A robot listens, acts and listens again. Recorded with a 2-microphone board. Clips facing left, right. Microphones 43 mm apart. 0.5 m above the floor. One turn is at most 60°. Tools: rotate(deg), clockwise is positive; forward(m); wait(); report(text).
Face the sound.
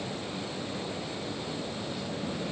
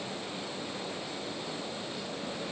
wait()
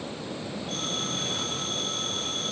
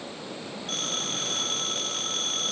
rotate(60)
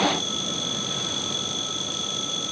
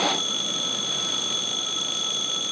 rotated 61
rotate(40)
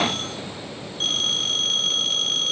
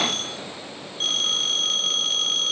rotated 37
report("Facing the phone ringing, over 4 m away.")